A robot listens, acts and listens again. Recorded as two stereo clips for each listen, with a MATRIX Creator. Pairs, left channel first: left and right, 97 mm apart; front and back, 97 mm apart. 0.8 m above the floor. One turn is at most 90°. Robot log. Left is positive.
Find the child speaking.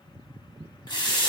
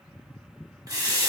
cmd idle
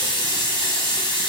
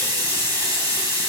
cmd idle
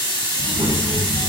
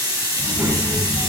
note: The child speaking: 105° right.
cmd yaw -90
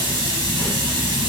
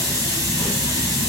note: Nothing new. It was at 15° right.
cmd yaw -15
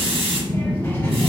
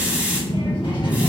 note: The child speaking is now 20° left.
cmd yaw +20
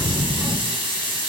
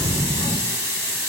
note: The child speaking is now 10° left.
cmd yaw +10
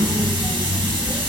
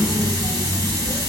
end: Found it: a child speaking, straight ahead, 1 to 2 m away.